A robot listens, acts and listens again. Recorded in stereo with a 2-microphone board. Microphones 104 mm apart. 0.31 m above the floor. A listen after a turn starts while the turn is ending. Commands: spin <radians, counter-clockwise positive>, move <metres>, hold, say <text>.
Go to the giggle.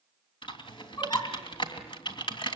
spin 0.70
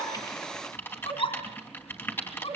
spin 1.75
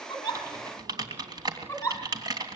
spin 0.44
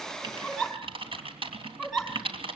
move 1.0
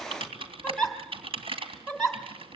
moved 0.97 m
move 1.0
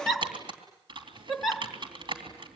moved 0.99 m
move 1.0
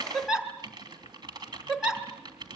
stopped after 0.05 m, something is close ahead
spin -0.17
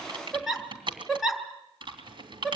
say I am next to the giggle.